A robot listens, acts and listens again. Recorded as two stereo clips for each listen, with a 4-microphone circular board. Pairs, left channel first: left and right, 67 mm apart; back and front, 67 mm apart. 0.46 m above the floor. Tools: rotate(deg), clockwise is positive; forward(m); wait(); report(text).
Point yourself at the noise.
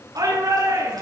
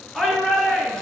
rotate(100)
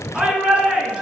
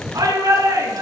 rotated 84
rotate(15)
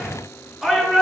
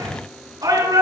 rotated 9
report("Found it: a shout, straight ahead.")